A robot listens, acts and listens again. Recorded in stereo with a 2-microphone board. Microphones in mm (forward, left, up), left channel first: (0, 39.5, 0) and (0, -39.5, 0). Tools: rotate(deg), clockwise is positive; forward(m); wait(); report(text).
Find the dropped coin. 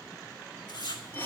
wait()
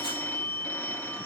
wait()
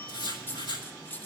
rotate(-25)
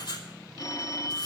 wait()
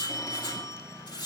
report("I heard a dropped coin, but can't make it out now. It was about straight ahead or 130° left.")